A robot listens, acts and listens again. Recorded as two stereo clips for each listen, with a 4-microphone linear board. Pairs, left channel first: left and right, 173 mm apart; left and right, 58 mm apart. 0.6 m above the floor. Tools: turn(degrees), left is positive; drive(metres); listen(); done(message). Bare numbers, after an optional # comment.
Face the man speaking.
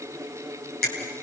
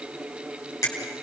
listen()
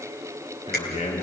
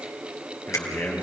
# The man speaking: about 35° left or 145° left.
turn(35)
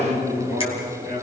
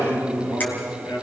# So it is at 110° left.
turn(110)
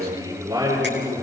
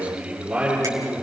# The man speaking is now 20° right.
turn(-20)
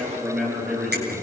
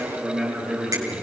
done("Facing the man speaking, over 4 m away.")